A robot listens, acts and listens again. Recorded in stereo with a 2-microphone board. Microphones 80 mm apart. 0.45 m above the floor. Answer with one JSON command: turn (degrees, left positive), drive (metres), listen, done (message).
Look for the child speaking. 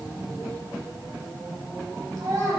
{"turn": -50}
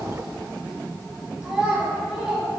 {"turn": -10}
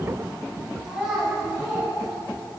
{"done": "Facing the child speaking."}